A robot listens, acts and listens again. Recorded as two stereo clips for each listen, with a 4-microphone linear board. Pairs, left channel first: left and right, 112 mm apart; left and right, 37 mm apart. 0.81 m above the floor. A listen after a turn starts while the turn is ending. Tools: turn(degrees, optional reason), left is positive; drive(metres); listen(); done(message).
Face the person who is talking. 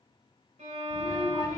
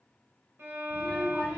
turn(degrees=35, reason="The child speaking: about 35° left or 145° left.")
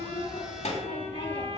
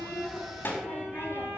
turn(degrees=115, reason="So it is at 115° left.")
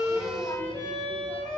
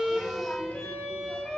listen()
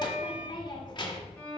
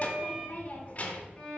turn(degrees=40, reason="The child speaking is now 40° left.")
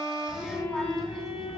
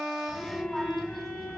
done("Found it: a child speaking, straight ahead.")